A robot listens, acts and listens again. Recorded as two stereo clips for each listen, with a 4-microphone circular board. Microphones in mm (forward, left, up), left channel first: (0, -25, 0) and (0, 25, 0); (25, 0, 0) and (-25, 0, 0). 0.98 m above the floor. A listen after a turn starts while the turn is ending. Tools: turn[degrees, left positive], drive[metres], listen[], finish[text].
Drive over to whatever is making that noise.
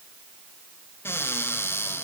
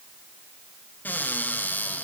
Thought: The cupboard door: 50° right.
Action: turn[-50]
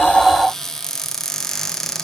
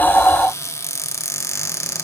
Action: drive[1.0]
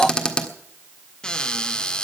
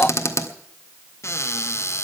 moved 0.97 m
Thought: The cupboard door is now 15° right.
Action: turn[-15]
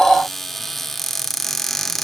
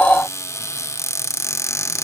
Action: drive[1.0]
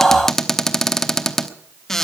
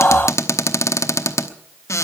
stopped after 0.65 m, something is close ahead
Action: finish[I am next to the cupboard door.]